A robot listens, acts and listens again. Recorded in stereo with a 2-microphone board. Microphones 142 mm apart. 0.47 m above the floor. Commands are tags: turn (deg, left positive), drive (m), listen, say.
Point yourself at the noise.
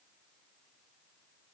<listen/>
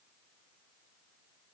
<listen/>
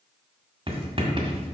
<turn deg="-40"/>
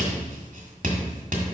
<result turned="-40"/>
<turn deg="-100"/>
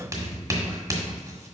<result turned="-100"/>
<turn deg="-25"/>
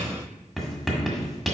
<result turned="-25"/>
<say>Facing the writing.</say>